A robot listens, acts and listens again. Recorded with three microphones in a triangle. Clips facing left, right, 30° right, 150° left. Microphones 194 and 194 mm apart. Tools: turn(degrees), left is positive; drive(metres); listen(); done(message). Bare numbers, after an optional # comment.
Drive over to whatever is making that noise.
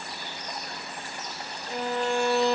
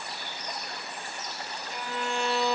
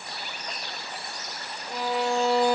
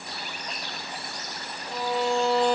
# The violin: 50° left.
turn(50)
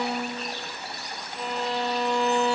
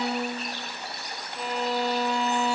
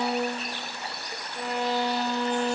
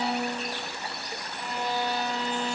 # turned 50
drive(1.0)
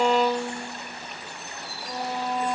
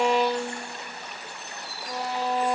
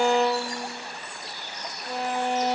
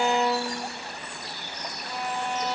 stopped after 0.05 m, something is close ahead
done("Blocked. The violin is further on, straight ahead.")